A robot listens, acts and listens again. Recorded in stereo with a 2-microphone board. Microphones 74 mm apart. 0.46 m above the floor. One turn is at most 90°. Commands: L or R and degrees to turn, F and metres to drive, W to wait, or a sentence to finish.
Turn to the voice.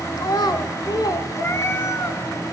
L65
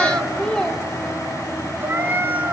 L10
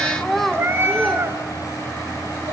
Facing the child speaking.